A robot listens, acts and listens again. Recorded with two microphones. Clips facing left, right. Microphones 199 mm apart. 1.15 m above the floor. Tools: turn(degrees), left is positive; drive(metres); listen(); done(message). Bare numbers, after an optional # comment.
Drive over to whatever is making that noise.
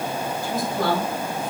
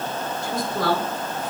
# The woman speaking: about 75° right or 105° right.
turn(-75)
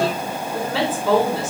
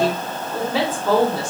drive(1.0)
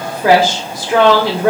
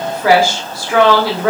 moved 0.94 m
# The woman speaking is now 20° left.
turn(20)
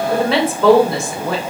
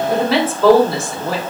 drive(1.0)
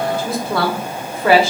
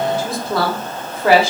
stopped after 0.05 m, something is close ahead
done("I am next to the woman speaking.")